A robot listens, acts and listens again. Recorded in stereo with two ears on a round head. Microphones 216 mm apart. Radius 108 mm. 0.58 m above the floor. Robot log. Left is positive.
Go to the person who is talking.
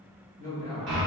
note: The man speaking: about 35° right or 145° right.
cmd yaw -35
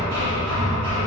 cmd idle
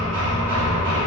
cmd idle
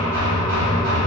end: I heard a man speaking, but can't make it out now. It was about straight ahead or 110° right. I did not reach it.